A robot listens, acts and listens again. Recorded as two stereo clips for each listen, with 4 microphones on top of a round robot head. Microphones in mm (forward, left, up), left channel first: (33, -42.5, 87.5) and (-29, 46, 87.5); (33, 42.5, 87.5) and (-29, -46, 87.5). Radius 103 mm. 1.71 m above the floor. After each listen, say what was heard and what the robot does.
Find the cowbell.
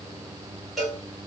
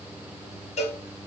The cowbell: 35° left. Turn 35° left.
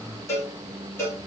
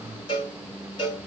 The cowbell is now 10° left. Turn 10° left.
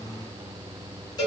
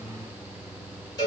Found it: a cowbell, straight ahead.